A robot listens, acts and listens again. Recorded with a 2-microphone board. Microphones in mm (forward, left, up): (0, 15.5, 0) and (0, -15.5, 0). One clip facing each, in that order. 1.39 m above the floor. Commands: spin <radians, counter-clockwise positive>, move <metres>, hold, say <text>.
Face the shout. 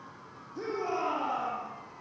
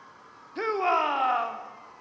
spin -1.05
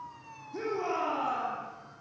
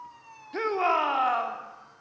spin -0.96
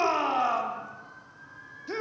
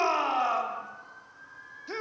say Found it: a shout, straight ahead, 2 to 4 m away.